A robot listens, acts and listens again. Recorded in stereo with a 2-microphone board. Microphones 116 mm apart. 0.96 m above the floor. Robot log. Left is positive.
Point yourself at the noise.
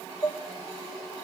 note: The dishes clattering: about 30° left or 150° left.
cmd yaw +30
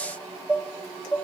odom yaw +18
note: So it is at 15° left.
cmd yaw +15
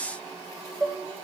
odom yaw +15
end: Facing the dishes clattering.